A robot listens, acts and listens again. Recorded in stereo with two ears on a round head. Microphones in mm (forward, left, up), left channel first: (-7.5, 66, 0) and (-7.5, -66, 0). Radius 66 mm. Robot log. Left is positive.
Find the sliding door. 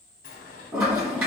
note: The sliding door: about 65° left or 115° left.
cmd yaw +65
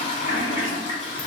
cmd idle
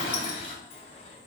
note: So it is at 45° left.
cmd yaw +45
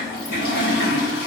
cmd idle
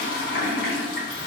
cmd idle
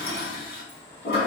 note: The sliding door is now 15° left.
cmd yaw +15
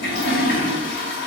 cmd idle
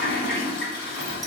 cmd idle
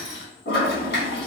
end: Facing where the sliding door came from. I can't hear it now.